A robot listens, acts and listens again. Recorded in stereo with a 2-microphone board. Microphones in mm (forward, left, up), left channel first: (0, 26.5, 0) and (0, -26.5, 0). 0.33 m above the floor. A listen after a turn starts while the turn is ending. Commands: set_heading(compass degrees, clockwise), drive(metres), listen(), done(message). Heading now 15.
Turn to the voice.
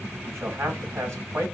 set_heading(70)
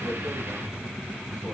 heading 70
listen()
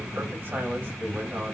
listen()
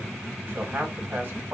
set_heading(115)
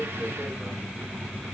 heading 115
listen()
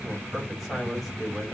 done("Found it: a man speaking, straight ahead, 2 to 4 m away.")